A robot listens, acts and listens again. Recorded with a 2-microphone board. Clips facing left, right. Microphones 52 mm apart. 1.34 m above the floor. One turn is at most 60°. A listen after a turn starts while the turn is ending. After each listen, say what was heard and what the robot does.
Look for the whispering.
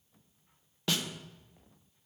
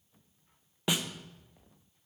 Keep listening.
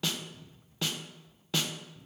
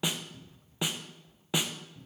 Keep listening.
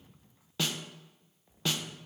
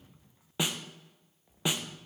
I can't make out whispering, only a cupboard door and a snare drum.